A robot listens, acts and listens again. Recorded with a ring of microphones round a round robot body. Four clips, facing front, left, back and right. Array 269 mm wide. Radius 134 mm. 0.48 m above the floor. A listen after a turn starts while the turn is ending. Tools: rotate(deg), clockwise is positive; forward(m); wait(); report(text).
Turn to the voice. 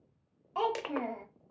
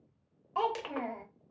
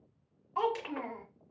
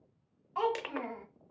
rotate(-40)
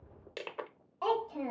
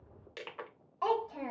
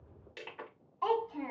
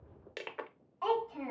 rotate(-30)
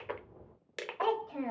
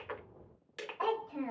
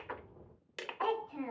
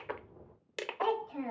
report("Facing the child speaking.")